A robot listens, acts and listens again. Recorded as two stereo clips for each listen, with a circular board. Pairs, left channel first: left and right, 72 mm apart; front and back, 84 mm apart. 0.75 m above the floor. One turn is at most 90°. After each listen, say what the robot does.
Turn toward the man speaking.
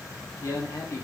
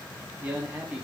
Turn 90° left.
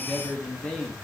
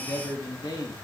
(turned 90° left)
Turn 10° left.
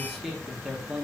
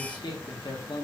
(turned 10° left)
Turn 10° right.
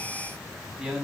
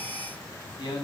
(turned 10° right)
Turn 15° right.
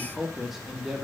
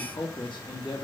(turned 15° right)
Turn 10° right.
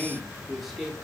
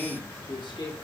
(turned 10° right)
Facing the man speaking, 2 to 4 m away.